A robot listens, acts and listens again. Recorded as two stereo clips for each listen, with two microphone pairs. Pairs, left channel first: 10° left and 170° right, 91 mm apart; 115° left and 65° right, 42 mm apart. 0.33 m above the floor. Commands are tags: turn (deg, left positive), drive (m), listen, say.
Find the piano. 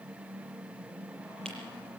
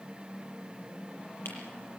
<listen/>
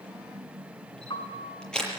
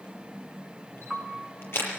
<turn deg="20"/>
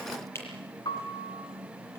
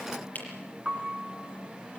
<say>Found it: a piano, straight ahead.</say>